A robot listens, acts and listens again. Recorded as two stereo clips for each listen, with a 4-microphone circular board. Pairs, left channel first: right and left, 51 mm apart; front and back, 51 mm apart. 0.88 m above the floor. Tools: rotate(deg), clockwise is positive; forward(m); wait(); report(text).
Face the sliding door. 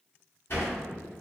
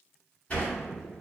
rotate(60)
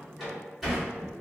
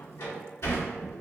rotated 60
report("Found it: a sliding door, straight ahead.")